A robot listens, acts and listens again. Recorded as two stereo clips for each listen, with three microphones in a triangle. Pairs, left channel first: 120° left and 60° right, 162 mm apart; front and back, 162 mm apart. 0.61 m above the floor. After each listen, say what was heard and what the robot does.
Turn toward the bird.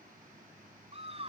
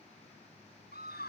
Keep listening.
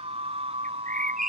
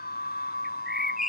The bird: 90° right. Turn 90° right.
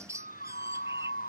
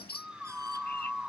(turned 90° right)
The bird is now 10° left. Turn 10° left.
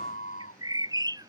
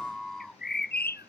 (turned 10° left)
Facing the bird.